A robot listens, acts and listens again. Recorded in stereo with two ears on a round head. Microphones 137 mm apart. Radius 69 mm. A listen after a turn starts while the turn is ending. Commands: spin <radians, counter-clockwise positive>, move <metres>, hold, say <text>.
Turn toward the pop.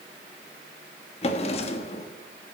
hold
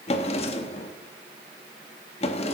hold
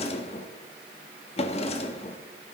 say I can't make out a pop, only a drawer.